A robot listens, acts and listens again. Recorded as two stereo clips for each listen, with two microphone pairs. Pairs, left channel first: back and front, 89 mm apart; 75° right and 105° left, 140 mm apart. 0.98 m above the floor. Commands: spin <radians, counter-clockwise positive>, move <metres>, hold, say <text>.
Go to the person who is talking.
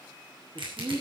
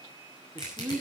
spin 0.35
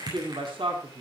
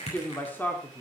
move 1.0
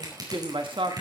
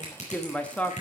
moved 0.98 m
move 1.0
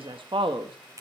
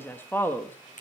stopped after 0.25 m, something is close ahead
say Arrived at the man speaking, straight ahead.